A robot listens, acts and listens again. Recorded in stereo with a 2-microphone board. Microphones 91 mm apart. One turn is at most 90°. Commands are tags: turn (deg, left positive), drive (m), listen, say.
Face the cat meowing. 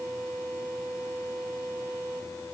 <listen/>
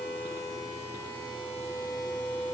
<listen/>
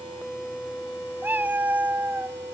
<turn deg="-20"/>
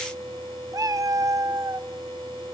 <turn deg="-90"/>
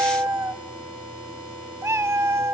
<turn deg="-30"/>
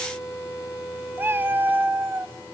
<turn deg="-25"/>
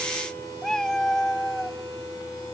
<say>Found it: a cat meowing, straight ahead, under 1 m away.</say>